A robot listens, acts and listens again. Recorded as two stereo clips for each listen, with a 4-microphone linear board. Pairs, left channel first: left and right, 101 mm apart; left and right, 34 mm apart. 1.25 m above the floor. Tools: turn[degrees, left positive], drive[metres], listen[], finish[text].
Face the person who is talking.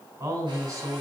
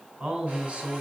Thought: The man speaking: about 40° right or 140° right.
Action: turn[-40]
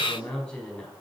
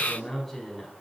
Action: finish[Found it: a man speaking, straight ahead.]